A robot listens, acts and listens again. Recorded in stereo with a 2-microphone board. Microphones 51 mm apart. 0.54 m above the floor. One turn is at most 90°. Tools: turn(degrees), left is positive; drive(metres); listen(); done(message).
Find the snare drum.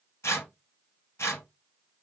listen()
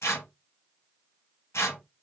listen()
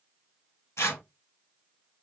done("I can't make out a snare drum to turn to.")